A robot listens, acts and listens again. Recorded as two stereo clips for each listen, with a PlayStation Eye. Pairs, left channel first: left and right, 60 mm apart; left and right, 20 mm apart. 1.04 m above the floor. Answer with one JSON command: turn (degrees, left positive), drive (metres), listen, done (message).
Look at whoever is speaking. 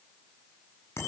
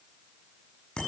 {"listen": true}
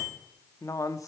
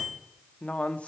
{"turn": 70}
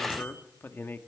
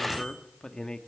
{"turn": 40}
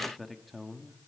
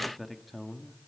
{"done": "Found it: a man speaking, straight ahead."}